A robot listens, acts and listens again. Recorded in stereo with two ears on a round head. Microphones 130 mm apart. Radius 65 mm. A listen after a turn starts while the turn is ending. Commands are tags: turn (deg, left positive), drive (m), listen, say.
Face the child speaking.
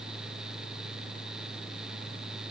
<listen/>
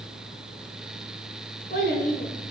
<turn deg="65"/>
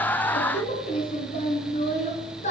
<turn deg="50"/>
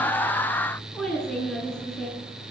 <say>Facing the child speaking.</say>